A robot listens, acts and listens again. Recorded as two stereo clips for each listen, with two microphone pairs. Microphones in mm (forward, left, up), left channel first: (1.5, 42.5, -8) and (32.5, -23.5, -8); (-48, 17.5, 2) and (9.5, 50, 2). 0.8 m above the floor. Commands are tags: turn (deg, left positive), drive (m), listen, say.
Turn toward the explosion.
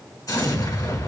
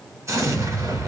<turn deg="75"/>
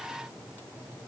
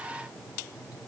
<say>I heard an explosion from this way, but can't make it out now.</say>